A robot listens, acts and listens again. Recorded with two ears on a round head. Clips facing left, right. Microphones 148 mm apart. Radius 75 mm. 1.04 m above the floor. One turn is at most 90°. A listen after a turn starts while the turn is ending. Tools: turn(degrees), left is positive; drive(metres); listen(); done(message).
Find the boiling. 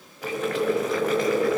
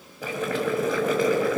turn(degrees=-90)
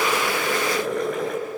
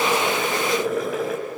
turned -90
done("Facing the boiling.")